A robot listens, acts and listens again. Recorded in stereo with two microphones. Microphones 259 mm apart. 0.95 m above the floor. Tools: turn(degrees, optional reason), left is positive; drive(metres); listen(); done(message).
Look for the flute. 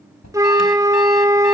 turn(degrees=-30)
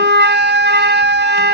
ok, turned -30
turn(degrees=-140, reason="So it is at 140° right.")
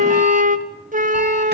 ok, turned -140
turn(degrees=-30, reason="The flute is now 30° right.")
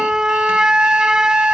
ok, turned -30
done("Facing the flute.")